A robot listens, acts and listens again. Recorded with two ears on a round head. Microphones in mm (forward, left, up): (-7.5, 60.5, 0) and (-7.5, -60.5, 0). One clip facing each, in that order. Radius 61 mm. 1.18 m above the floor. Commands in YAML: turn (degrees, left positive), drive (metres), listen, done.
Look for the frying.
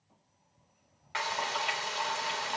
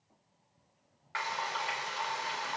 turn: 25
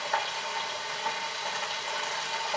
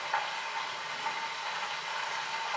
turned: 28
turn: 125
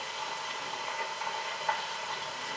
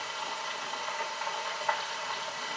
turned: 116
turn: 10
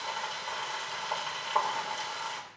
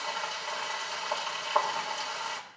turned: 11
done: "Facing the frying, 2 to 4 m away."